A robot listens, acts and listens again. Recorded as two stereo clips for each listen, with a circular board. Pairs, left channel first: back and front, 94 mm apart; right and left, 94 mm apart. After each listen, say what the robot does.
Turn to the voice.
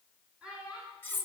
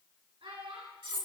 Turn 80° left.
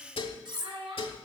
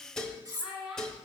Found it: a child speaking, straight ahead, 2 to 4 m away.